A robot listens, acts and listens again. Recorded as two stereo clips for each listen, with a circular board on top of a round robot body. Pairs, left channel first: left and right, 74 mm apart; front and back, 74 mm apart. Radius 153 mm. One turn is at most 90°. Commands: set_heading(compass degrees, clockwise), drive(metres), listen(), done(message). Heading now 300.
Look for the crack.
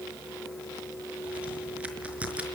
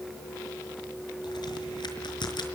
set_heading(320)
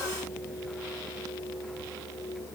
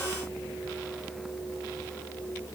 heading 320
done("Facing where the crack came from. I can't hear it now.")